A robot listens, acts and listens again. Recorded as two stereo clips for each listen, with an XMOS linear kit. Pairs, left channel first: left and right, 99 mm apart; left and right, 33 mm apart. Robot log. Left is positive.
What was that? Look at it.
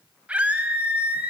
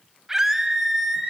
cmd yaw -30
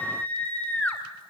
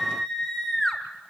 note: So it is at 15° left.
cmd yaw +15
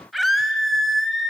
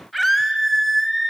end: Facing the scream, 2 to 4 m away.